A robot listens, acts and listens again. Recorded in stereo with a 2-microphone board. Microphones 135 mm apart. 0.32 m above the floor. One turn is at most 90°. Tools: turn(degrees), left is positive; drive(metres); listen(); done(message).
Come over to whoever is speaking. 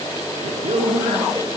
turn(degrees=-60)
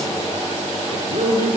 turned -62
turn(degrees=-55)
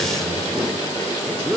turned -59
drive(metres=1.0)
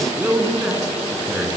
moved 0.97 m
drive(metres=1.0)
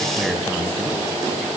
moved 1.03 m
listen()
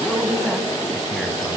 drive(metres=1.0)
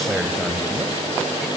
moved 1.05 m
drive(metres=1.0)
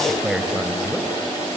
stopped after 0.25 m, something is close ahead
done("I am next to the man speaking.")